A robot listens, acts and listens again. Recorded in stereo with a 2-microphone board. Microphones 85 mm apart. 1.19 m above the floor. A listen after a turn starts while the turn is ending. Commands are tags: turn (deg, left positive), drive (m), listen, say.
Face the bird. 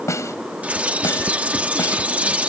<turn deg="-15"/>
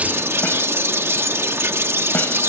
<turn deg="-150"/>
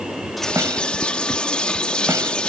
<turn deg="15"/>
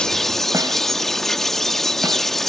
<say>Facing the bird.</say>